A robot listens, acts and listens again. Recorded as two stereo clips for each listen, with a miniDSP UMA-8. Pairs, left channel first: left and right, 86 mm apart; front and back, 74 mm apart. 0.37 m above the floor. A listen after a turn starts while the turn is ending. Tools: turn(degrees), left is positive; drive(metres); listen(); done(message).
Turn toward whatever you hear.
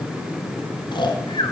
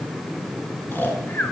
turn(degrees=65)
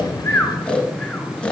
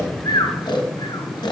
turn(degrees=15)
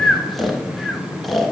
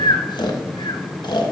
done("Facing the snoring, 1 to 2 m away.")